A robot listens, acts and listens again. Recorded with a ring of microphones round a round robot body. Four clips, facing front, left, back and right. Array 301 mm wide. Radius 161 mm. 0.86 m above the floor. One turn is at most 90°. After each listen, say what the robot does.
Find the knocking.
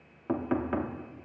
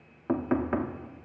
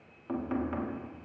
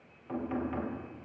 Turn 60° left.
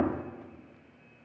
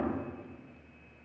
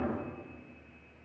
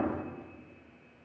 Facing the knocking, 1 to 2 m away.